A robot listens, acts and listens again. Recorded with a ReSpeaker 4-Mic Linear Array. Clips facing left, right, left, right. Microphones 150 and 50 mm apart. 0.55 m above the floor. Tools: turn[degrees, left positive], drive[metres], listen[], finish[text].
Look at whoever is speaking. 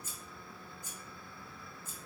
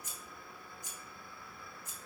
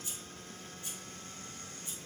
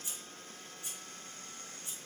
Action: listen[]
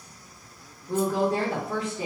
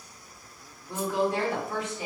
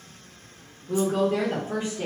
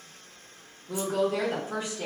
Thought: The woman speaking: about 25° left or 155° left.
Action: turn[25]
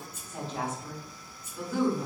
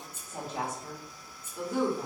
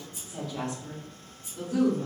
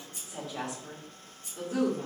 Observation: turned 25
Thought: So it is at 25° right.
Action: turn[-25]
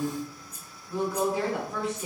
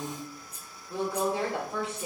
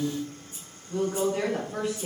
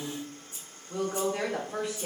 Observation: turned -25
Thought: The woman speaking is now 25° right.
Action: turn[-25]
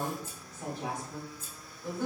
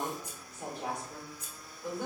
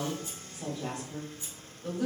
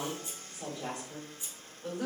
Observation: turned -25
Thought: The woman speaking is now 15° right.
Action: turn[-15]
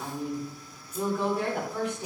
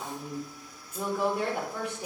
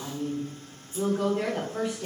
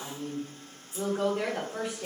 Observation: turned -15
Thought: The woman speaking is now 10° right.
Action: turn[-10]
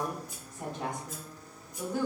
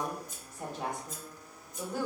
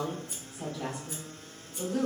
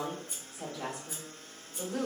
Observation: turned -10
Action: finish[Found it: a woman speaking, straight ahead, 1 to 2 m away.]